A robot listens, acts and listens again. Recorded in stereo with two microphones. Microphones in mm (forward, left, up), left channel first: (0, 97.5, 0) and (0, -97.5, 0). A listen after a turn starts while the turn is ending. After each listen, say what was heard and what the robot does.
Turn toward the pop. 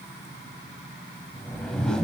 Keep listening.
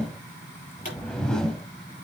The pop: about 45° left or 135° left. Turn 45° left.
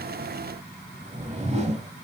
Keep listening.
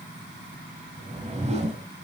I heard a pop, but can't make it out now. It was about straight ahead or 90° left.